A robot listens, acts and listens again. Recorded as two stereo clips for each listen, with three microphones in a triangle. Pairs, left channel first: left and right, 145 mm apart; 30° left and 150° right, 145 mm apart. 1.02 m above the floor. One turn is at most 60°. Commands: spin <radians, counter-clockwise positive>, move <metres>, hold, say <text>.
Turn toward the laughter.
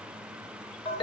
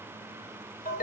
hold
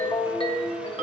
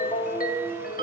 hold
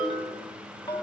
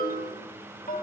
say I can't make out laughter to turn to.